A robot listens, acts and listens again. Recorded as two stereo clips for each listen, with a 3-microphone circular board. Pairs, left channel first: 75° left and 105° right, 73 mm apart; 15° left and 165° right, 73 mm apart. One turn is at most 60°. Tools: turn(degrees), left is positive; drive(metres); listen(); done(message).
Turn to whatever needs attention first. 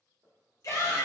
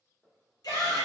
turn(degrees=35)
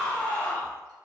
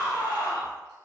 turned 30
done("Facing the shout, 1 to 2 m away.")